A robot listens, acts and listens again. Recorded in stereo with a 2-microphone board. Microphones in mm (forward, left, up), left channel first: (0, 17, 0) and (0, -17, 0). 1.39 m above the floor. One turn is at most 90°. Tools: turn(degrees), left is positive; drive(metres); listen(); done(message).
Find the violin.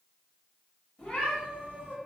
listen()
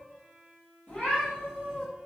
turn(degrees=-40)
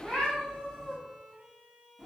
turn(degrees=-90)
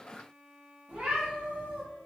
done("Facing the violin, under 1 m away.")